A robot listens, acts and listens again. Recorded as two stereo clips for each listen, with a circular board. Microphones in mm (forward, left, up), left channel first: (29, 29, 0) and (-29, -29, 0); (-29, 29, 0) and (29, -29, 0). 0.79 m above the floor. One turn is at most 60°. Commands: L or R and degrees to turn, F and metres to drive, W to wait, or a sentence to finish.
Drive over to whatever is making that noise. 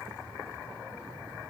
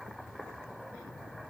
W
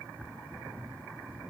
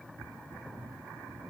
W
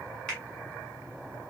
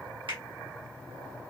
R35
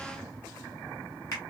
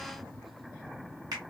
F1.0
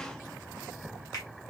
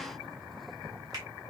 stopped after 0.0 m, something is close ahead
Blocked. The finger snap is further on, straight ahead.